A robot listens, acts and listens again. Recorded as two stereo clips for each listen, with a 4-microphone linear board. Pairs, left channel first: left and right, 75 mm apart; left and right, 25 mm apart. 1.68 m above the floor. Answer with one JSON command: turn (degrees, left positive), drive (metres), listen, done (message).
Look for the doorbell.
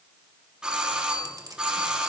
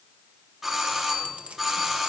{"turn": -30}
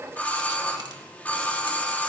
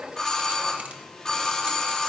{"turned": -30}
{"turn": 25}
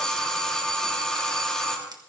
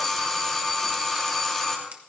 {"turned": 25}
{"turn": 10}
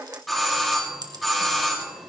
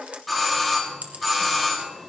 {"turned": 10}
{"done": "Facing the doorbell, 2 to 4 m away."}